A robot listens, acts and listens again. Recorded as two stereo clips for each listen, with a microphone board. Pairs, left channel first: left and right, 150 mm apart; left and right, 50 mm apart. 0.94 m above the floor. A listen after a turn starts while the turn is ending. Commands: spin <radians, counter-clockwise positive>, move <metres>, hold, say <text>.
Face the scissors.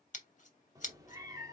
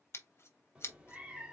spin 0.96
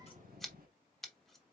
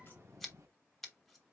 say Facing the scissors, 1 to 2 m away.